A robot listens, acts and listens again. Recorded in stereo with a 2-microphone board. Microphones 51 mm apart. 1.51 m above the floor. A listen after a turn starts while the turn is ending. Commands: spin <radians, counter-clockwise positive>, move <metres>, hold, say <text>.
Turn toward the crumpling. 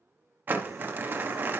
spin -0.61
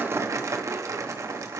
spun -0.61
spin -1.92
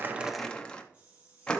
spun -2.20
spin 0.26
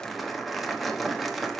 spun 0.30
say Found it: crumpling, straight ahead.